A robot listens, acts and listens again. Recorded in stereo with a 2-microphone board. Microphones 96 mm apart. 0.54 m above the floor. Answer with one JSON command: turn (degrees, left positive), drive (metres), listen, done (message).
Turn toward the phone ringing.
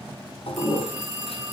{"turn": 30}
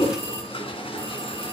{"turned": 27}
{"listen": true}
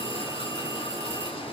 {"listen": true}
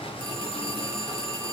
{"turn": 150}
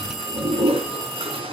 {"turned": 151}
{"done": "Facing the phone ringing, over 4 m away."}